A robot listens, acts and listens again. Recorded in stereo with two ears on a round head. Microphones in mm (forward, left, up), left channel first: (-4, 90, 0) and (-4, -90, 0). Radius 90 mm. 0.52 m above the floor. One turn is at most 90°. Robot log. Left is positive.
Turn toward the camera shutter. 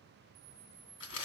note: The camera shutter: about 20° right or 160° right.
cmd yaw -20
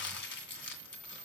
end: Found it: a camera shutter, straight ahead, 1 to 2 m away.